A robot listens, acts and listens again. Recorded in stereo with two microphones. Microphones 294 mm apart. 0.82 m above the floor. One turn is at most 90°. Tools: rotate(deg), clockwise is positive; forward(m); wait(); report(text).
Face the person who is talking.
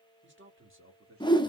rotate(45)
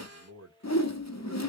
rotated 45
rotate(60)
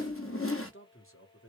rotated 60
rotate(-50)
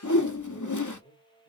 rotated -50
rotate(-35)
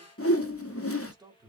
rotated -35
rotate(15)
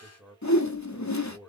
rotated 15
report("Found it: a man speaking, straight ahead, 2 to 4 m away.")